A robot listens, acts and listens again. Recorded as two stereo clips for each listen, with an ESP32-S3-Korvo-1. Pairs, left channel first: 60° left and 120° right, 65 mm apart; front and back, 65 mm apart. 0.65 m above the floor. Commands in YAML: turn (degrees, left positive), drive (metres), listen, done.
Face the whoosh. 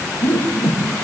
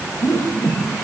turn: 30
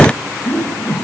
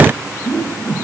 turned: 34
done: "Facing the whoosh, over 4 m away."